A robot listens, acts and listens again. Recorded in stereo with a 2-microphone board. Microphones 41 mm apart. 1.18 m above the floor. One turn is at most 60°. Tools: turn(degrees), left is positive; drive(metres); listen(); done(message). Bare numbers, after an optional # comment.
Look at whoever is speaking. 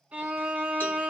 listen()
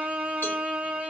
listen()
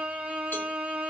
done("I can't make out anyone speaking, only a violin.")